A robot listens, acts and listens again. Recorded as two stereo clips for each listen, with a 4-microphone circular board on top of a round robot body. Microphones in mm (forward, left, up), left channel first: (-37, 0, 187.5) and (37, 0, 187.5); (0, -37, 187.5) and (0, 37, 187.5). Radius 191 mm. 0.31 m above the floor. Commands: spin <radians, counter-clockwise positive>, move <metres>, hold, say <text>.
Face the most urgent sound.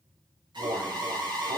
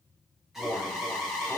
say Facing the alarm.